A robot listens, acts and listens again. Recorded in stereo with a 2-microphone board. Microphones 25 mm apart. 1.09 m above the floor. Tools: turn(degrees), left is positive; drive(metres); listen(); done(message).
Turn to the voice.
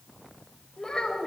turn(degrees=25)
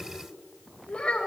turn(degrees=130)
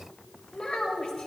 turn(degrees=40)
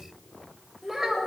turn(degrees=-10)
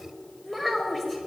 done("Found it: a child speaking, straight ahead, 2 to 4 m away.")